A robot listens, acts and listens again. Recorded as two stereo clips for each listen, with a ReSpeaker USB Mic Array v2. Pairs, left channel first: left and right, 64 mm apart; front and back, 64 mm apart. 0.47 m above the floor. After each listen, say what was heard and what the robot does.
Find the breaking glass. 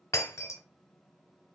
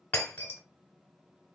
The breaking glass: 55° left. Turn 55° left.
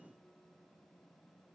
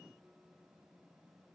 I heard breaking glass from this way, but can't make it out now.